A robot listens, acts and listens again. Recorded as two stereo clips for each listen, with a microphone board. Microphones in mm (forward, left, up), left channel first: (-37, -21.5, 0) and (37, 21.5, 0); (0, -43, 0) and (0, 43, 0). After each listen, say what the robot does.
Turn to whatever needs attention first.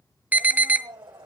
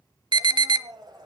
Turn 95° left.
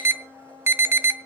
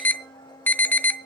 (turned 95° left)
Turn 25° right.
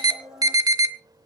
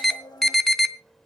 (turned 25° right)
Found it: an alarm, straight ahead.